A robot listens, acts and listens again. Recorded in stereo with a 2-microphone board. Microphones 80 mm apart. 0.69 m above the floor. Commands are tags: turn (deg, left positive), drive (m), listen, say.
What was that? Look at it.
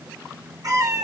<turn deg="-50"/>
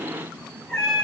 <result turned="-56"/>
<say>Found it: a cat meowing, straight ahead, over 4 m away.</say>